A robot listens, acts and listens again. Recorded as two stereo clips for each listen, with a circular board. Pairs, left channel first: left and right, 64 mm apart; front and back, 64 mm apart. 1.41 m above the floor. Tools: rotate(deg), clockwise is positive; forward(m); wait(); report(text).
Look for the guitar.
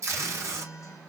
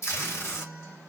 rotate(-55)
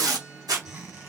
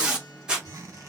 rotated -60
report("Found it: a guitar, straight ahead, 1 to 2 m away.")